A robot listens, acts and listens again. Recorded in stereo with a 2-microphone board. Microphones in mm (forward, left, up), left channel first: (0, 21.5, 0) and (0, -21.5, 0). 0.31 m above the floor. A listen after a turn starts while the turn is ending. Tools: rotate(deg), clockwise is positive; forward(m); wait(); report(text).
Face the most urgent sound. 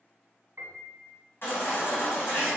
rotate(-55)
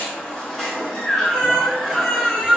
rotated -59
rotate(-10)
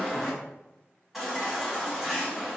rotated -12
report("Found it: a baby crying, straight ahead.")